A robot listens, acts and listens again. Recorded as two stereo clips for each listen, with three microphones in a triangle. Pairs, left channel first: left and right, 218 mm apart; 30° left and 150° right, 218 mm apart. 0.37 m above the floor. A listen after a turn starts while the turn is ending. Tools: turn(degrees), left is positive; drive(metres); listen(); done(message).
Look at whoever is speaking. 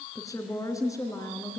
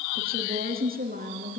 turn(degrees=165)
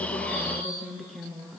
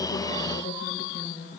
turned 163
done("Facing the woman speaking.")